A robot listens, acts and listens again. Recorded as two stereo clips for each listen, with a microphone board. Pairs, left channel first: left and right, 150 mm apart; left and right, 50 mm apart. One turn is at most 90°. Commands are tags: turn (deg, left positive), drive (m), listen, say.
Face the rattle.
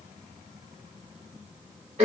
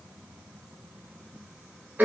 <listen/>
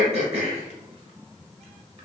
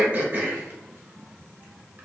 <listen/>
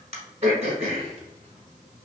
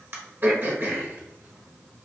<say>I can't make out a rattle, only throat clearing.</say>